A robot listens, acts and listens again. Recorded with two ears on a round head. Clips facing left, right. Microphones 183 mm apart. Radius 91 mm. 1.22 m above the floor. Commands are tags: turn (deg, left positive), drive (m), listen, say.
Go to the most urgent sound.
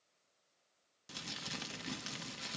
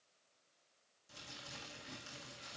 <listen/>
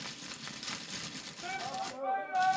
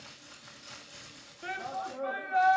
<turn deg="-20"/>
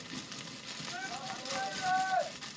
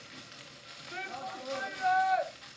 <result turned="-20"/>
<turn deg="-140"/>
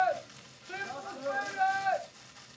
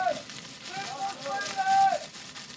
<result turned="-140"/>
<turn deg="25"/>
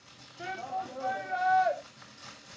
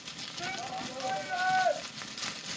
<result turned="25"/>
<drive m="1.0"/>
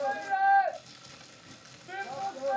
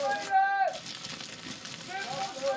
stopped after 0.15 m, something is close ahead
<say>Blocked. The shout is further on, straight ahead.</say>